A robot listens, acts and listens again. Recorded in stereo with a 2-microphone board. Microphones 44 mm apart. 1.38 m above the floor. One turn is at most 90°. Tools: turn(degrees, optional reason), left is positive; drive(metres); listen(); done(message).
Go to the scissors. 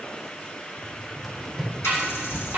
turn(degrees=-60, reason="The scissors: about 60° right or 120° right.")
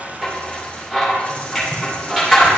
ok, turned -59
drive(metres=1.0)
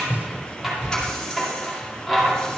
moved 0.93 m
drive(metres=1.0)
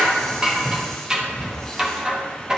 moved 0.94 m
turn(degrees=-20, reason="The scissors is now 20° right.")
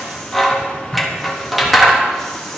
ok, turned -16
drive(metres=1.0)
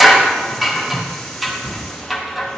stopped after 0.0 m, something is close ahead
done("Arrived at the scissors, straight ahead.")